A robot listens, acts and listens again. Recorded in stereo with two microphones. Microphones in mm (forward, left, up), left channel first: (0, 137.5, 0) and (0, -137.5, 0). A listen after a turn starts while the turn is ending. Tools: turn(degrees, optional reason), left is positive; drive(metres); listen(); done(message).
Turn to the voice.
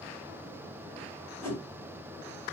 listen()
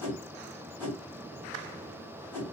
listen()
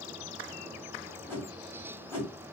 done("I can't make out anyone speaking to turn to.")